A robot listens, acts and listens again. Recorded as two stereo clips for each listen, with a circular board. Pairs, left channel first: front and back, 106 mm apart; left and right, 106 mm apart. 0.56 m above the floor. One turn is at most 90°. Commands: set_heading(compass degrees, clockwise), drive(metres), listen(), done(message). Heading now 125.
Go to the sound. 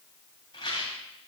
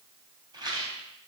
set_heading(170)
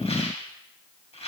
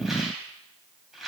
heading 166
drive(1.0)
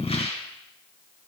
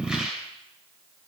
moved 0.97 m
drive(1.0)
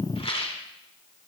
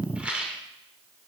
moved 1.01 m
set_heading(176)
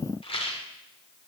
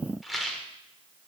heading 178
drive(1.0)
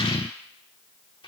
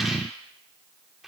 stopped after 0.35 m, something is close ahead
listen()
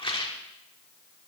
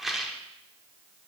done("I am next to the rattle.")